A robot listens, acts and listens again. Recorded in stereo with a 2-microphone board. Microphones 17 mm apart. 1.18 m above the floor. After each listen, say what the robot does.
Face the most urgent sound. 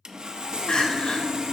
Turn 90° left.
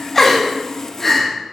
Turn 15° left.
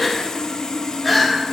Found it: crying, straight ahead, 1 to 2 m away.